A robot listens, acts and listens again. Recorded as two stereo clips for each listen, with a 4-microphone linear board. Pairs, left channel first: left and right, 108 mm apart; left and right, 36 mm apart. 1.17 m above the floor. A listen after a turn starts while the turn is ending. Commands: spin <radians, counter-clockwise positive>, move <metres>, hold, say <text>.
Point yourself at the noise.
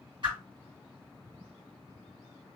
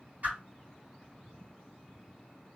spin -0.87
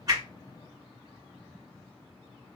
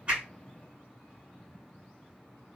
hold
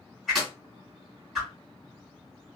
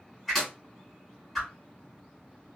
say Facing the whoosh, 2 to 4 m away.